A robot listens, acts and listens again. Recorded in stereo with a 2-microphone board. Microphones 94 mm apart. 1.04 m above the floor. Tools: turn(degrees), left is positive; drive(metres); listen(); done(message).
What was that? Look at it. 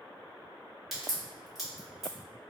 turn(degrees=-30)
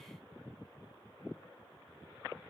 listen()
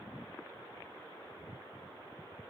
done("I heard a crack, but can't make it out now. It was about 25° left or 145° right.")